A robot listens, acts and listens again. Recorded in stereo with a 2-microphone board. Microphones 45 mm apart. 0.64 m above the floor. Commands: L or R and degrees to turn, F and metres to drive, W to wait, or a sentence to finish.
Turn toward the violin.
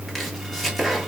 W
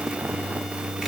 W
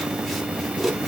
I can't make out a violin to turn to.